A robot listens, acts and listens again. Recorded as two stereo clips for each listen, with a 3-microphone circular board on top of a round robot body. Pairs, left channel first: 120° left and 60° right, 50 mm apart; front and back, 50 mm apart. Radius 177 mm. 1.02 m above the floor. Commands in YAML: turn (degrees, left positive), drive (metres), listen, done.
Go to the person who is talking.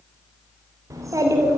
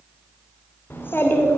turn: -45
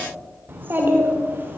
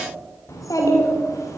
drive: 1.0
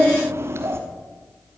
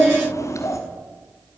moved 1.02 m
turn: -20
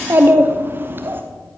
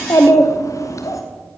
turn: -10
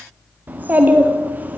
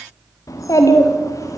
drive: 1.0
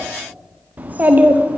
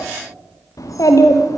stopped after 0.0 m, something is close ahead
done: "Arrived at the child speaking, straight ahead."